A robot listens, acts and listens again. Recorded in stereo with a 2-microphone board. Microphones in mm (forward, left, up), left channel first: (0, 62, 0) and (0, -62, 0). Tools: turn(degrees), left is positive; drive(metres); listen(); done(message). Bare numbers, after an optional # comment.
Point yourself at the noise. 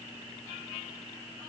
listen()
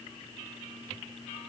listen()
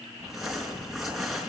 turn(30)
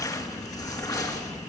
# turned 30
# So it is at 150° left.
turn(150)
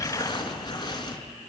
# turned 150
# The crumpling is now 35° left.
turn(35)
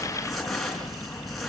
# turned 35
done("Found it: crumpling, straight ahead.")